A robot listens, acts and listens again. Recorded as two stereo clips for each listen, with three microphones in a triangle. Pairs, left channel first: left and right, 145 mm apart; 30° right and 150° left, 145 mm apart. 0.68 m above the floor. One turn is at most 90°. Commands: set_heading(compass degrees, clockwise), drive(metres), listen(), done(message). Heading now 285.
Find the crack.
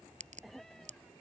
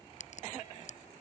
set_heading(345)
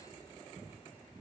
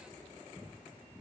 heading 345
done("Facing where the crack came from. I can't hear it now.")